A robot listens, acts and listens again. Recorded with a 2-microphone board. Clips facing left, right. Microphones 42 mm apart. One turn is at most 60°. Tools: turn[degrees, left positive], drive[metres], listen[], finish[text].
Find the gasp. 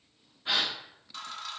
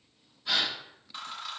Thought: The gasp: about 35° left or 145° left.
Action: turn[35]
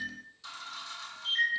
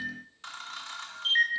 Action: listen[]
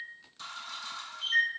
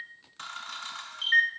Action: finish[I heard a gasp, but can't make it out now. It was about straight ahead or 110° left.]